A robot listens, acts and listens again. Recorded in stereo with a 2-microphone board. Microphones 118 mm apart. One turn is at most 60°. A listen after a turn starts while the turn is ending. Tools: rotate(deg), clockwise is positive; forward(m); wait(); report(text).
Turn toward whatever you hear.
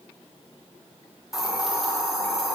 rotate(-30)
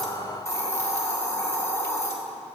rotate(-60)
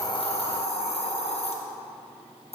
rotate(-60)
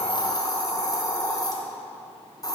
rotate(-35)
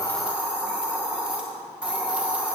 rotate(10)
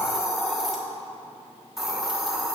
report("Found it: a hiss, straight ahead.")